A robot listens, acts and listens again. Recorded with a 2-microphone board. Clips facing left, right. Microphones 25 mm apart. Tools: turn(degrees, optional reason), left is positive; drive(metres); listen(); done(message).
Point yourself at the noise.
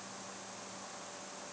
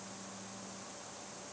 listen()
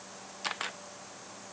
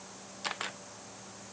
turn(degrees=30)
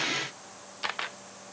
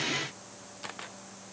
turn(degrees=145, reason="So it is at 145° left.")
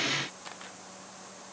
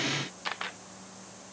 turn(degrees=-40, reason="The camera shutter is now 40° right.")
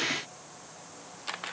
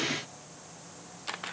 done("Found it: a camera shutter, straight ahead.")